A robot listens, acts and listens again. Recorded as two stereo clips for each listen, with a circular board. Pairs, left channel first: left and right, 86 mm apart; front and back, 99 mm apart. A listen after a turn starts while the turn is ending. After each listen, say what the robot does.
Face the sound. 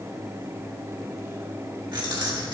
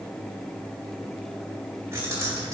Turn 120° right.
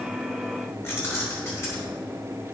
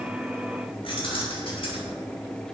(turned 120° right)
Turn 30° left.
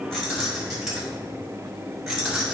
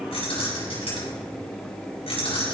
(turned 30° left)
Facing the keys jangling, over 4 m away.